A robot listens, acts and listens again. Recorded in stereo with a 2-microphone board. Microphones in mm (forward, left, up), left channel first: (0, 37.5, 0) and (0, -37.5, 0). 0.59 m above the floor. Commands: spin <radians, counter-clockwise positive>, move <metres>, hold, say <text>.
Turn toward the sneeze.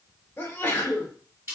spin 0.52
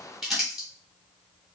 hold
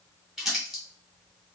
say I heard a sneeze, but can't make it out now. It was about straight ahead or 120° left.